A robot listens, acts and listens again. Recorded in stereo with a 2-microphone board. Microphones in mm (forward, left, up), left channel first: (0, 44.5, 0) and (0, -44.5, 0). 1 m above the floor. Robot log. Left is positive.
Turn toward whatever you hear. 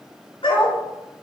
cmd yaw +90
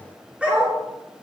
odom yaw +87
note: So it is at 15° right.
cmd yaw -15
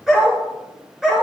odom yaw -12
note: The dog barking is now 10° right.
cmd yaw -10
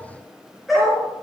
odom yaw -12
end: Facing the dog barking.